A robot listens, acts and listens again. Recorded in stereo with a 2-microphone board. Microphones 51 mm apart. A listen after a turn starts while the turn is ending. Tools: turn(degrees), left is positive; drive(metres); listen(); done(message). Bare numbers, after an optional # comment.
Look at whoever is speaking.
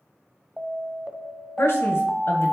# The man speaking: about 60° left or 120° left.
turn(60)
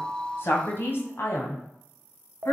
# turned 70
# So it is at 60° left.
turn(60)
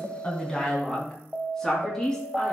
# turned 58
# The man speaking is now 10° left.
turn(10)
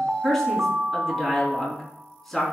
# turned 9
done("Found it: a man speaking, straight ahead.")